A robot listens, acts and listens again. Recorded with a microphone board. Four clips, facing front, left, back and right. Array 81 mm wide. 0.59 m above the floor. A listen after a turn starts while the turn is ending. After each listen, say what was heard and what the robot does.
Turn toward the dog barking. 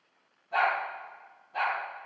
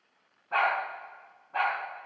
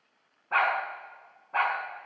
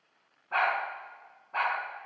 The dog barking: 160° right. Turn 160° right.
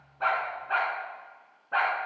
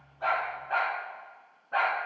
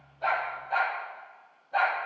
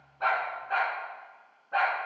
Found it: a dog barking, straight ahead, 2 to 4 m away.